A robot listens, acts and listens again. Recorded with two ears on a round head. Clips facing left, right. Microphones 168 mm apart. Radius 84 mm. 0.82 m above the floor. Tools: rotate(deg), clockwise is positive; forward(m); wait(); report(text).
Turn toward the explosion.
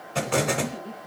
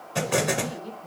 rotate(30)
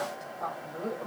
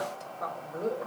wait()
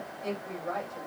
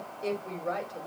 report("I heard an explosion, but can't make it out now. It was about 20° left or 140° right.")